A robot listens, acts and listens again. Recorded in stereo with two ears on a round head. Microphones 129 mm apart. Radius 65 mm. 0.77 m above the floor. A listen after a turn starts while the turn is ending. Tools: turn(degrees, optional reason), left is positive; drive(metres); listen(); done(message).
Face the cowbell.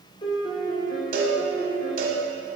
turn(degrees=-65, reason="The cowbell: about 65° right or 115° right.")
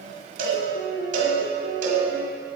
turn(degrees=-50, reason="So it is at 50° right.")
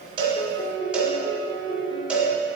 turn(degrees=-10, reason="The cowbell is now 10° right.")
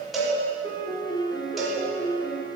done("Found it: a cowbell, straight ahead.")